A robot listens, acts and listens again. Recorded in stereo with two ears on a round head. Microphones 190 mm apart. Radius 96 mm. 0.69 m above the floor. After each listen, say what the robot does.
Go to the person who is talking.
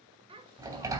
Turn 25° right.
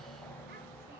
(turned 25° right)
Keep listening.
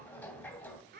Turn 130° right.
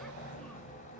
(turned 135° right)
Keep listening.
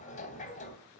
Keep listening.
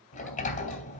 Facing where the child speaking came from. I can't hear it now. I did not reach it.